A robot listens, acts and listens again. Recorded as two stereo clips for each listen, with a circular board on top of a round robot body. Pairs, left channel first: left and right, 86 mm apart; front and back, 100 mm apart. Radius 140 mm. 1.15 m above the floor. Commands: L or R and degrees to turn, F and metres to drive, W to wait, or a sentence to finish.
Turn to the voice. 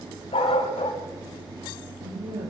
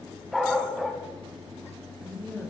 R75
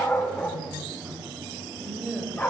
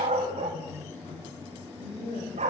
Facing the woman speaking.